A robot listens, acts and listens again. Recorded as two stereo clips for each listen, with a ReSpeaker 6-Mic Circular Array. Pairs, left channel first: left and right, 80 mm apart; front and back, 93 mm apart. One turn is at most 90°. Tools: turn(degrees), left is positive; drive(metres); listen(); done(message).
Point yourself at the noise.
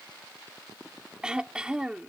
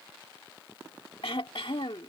turn(degrees=-10)
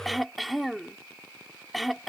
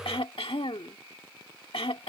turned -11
done("Facing the throat clearing.")